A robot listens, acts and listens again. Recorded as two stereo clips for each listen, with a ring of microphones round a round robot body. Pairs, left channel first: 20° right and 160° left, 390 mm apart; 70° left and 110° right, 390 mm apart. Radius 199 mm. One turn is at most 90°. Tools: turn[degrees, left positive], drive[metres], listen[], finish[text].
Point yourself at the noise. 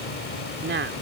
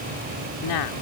Thought: The woman speaking: 95° left.
Action: turn[90]
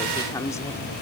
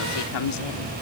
Thought: The woman speaking is now 60° left.
Action: turn[60]
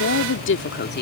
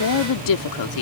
Thought: The woman speaking is now 40° left.
Action: turn[40]
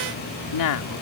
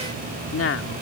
Thought: The woman speaking is now 15° left.
Action: turn[15]
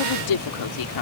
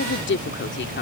Action: finish[Facing the woman speaking.]